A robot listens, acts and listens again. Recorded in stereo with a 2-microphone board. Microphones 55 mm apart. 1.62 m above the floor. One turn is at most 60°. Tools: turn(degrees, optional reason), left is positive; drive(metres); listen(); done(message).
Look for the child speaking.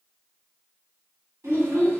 turn(degrees=-60, reason="The child speaking: about 60° right or 120° right.")
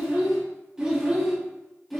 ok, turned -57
done("Facing the child speaking, 1 to 2 m away.")